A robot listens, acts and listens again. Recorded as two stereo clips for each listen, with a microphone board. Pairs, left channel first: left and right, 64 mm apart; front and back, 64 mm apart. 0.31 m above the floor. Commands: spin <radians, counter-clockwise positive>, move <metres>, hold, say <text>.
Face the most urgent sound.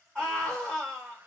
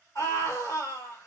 spin 0.26
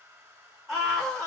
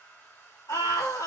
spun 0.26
say Facing the scream, 2 to 4 m away.